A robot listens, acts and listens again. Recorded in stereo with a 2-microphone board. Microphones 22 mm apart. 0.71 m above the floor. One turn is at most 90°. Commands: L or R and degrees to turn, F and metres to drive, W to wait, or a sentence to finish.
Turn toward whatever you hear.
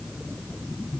W
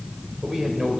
R30
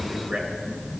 W
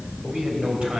R90
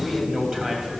R30
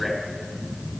W
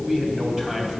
R20
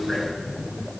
W
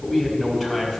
Found it: a man speaking, straight ahead.